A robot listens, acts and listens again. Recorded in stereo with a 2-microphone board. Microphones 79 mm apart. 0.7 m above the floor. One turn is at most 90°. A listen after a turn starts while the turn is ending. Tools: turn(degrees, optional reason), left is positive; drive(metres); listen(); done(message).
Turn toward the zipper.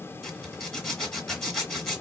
turn(degrees=30)
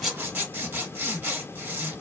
turn(degrees=-30, reason="So it is at 30° right.")
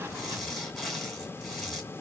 done("Facing the zipper.")